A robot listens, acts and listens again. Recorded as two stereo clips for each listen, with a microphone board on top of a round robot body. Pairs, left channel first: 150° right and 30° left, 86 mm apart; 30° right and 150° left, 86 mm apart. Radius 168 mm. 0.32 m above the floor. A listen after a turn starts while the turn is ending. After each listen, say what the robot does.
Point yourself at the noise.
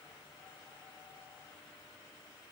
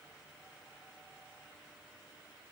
Keep listening.
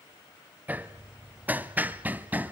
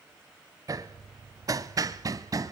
Turn 100° left.
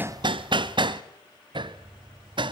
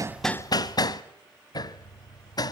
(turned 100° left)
Turn 10° left.
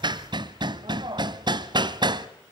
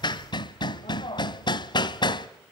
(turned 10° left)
Found it: hammering, straight ahead, under 1 m away.